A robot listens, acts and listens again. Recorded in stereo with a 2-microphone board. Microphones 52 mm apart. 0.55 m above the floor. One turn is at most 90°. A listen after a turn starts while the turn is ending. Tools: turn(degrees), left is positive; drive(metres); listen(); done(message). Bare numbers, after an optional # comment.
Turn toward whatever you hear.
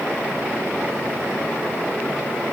listen()
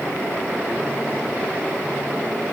listen()
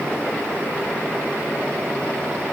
done("I can't make out anything to turn to.")